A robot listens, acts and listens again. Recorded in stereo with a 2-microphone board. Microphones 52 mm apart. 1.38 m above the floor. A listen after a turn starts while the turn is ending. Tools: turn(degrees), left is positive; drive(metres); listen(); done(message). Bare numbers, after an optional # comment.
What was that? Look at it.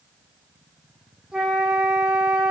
turn(-30)
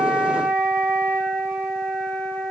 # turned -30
# So it is at 20° left.
turn(20)
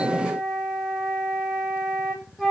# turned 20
done("Found it: a flute, straight ahead, over 4 m away.")